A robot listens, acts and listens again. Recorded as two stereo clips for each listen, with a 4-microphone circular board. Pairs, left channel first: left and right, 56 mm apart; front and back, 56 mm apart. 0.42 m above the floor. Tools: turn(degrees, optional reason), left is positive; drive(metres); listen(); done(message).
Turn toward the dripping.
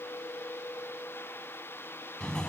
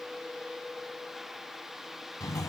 listen()
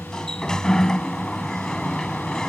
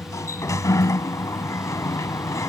listen()
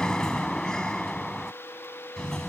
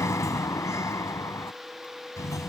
done("I can't make out dripping to turn to.")